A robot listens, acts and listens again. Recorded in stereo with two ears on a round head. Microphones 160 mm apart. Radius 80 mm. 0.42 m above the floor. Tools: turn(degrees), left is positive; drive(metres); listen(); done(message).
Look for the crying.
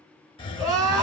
turn(degrees=-15)
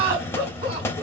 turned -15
turn(degrees=-150)
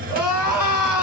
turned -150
turn(degrees=-10)
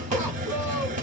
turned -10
listen()
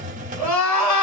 done("Facing the crying.")